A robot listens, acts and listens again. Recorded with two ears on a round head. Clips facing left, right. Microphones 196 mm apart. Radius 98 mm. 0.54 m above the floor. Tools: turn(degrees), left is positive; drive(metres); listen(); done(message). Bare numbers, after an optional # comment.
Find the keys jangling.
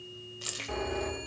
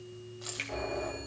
# The keys jangling: about 40° left or 140° left.
turn(40)
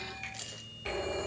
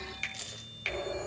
done("Found it: keys jangling, straight ahead, 1 to 2 m away.")